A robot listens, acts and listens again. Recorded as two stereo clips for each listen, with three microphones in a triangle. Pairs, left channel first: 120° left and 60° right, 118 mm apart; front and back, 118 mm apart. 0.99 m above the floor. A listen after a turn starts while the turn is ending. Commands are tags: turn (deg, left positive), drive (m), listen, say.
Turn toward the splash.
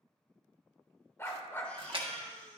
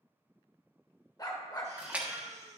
<turn deg="-100"/>
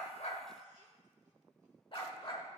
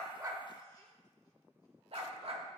<say>I heard a splash from this way, but can't make it out now.</say>